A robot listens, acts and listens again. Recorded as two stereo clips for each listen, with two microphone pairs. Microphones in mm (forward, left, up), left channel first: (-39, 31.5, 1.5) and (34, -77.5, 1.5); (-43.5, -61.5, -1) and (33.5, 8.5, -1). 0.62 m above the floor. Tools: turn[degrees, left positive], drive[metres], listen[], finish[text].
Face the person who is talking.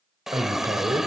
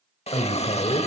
Thought: The man speaking: 115° right.
Action: turn[-115]
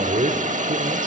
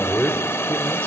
Thought: The man speaking is now 55° right.
Action: turn[-55]
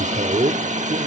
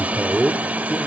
Thought: The man speaking is now 45° right.
Action: turn[-45]
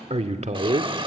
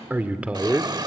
Thought: The man speaking is now 40° right.
Action: turn[-40]
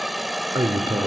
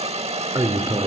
Thought: The man speaking is now 10° right.
Action: turn[-10]
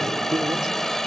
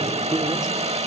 Action: finish[Found it: a man speaking, straight ahead.]